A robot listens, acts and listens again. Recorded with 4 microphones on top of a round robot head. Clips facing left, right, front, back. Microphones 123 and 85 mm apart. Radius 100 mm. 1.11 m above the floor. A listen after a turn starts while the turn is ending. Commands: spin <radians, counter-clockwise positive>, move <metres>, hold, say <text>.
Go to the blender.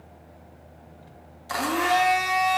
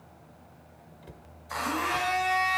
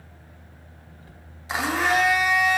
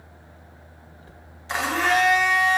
spin 1.48
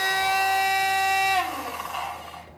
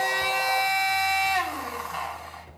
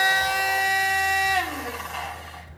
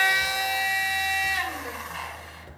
spin 0.17
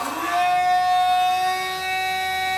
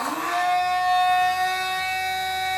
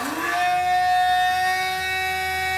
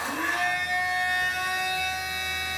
move 1.0
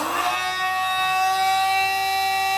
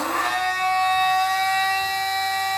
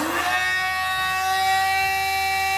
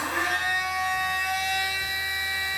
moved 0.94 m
spin 0.17
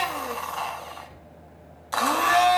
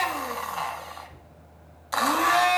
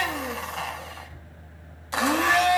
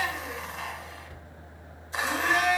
move 1.0
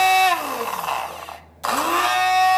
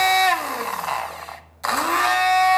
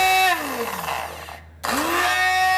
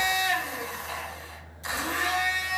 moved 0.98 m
spin 0.17
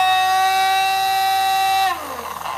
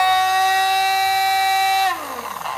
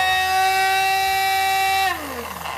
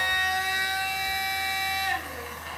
move 1.0
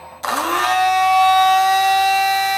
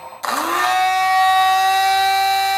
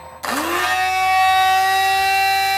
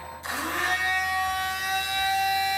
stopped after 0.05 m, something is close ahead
say Arrived at the blender, straight ahead.